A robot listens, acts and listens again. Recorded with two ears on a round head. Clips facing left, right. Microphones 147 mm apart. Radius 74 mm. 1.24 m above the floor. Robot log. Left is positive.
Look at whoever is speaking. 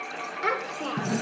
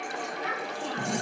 cmd yaw +90
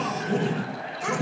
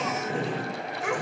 end: Found it: a child speaking, straight ahead, 2 to 4 m away.